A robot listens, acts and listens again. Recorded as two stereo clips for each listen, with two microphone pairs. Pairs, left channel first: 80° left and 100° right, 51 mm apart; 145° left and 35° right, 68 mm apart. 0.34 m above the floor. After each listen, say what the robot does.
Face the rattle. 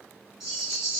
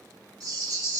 Turn 15° right.
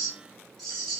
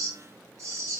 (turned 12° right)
Found it: a rattle, straight ahead.